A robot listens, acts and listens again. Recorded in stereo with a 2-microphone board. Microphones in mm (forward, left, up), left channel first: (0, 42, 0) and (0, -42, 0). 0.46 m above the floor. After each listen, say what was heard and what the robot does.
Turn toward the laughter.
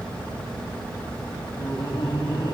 The laughter: about 60° left or 120° left. Turn 60° left.
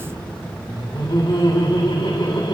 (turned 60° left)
So it is at 75° left. Turn 75° left.
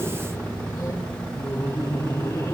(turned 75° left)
The laughter is now 45° left. Turn 45° left.
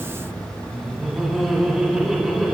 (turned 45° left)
Found it: laughter, straight ahead.